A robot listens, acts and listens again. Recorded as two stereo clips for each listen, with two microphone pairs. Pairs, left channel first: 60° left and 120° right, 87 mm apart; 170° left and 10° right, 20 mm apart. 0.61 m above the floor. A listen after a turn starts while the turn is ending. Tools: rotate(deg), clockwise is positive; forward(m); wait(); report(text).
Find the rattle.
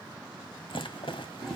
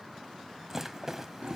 rotate(-60)
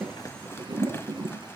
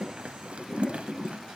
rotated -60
report("Found it: a rattle, straight ahead.")